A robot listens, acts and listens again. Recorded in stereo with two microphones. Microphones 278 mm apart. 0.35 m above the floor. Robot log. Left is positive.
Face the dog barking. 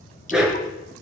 cmd yaw +30
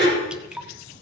note: So it is at 140° left.
cmd yaw +140
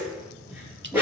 end: Facing the dog barking, over 4 m away.